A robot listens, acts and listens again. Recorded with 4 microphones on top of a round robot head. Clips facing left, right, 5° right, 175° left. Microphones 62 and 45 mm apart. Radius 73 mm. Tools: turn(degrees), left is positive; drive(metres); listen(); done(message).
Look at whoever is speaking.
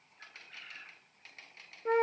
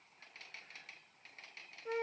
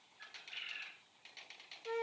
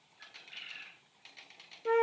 listen()
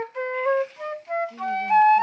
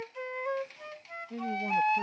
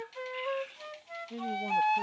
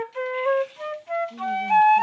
turn(degrees=-40)
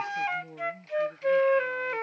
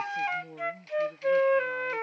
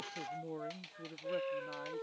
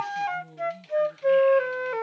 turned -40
turn(degrees=-10)
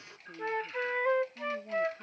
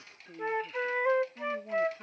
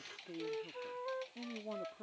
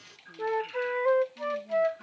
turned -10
turn(degrees=-10)
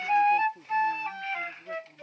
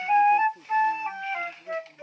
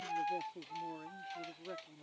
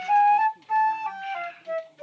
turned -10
done("Facing the man speaking.")